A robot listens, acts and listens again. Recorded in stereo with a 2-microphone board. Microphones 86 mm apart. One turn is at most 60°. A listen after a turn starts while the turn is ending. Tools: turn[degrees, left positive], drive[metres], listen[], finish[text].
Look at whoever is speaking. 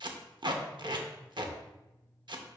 Action: listen[]
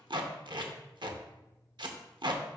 Action: listen[]
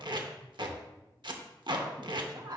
Thought: The woman speaking: about 50° right or 130° right.
Action: turn[-50]
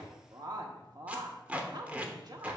Thought: So it is at 70° right.
Action: turn[-60]
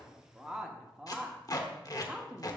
Thought: The woman speaking is now 10° right.
Action: turn[-10]
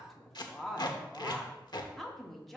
Action: finish[Found it: a woman speaking, straight ahead.]